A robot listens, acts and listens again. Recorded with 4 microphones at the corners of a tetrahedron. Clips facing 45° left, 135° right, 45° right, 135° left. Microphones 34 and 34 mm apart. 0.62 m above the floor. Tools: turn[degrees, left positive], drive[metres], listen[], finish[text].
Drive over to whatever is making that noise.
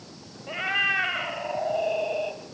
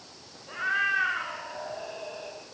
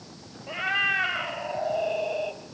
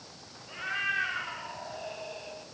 Thought: The cat meowing: 10° left.
Action: turn[10]
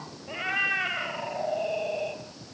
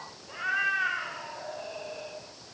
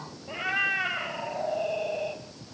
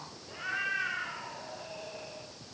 Action: drive[1.0]
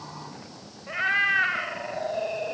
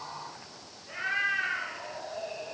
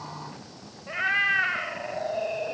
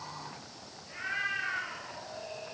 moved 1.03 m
Action: drive[1.0]
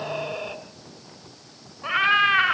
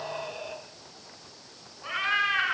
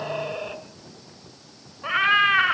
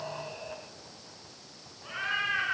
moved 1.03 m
Thought: The cat meowing is now 10° right.
Action: turn[-10]
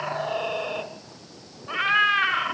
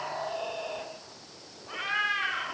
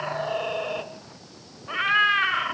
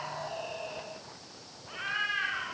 Action: drive[1.0]
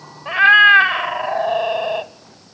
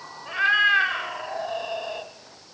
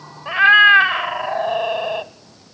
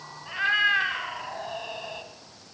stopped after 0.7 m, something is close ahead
Action: finish[I am next to the cat meowing.]